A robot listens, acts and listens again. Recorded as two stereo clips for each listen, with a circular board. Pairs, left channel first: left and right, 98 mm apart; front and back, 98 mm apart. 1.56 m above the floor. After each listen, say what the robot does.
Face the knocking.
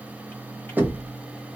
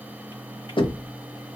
Turn 20° right.
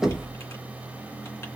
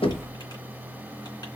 Facing the knocking, 1 to 2 m away.